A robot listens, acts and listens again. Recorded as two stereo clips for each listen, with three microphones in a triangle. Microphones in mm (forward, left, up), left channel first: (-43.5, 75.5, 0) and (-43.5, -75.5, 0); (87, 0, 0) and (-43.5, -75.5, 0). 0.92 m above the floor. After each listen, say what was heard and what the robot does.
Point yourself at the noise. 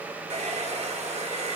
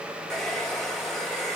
The hair dryer: 55° right. Turn 55° right.
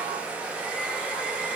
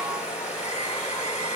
Facing the hair dryer.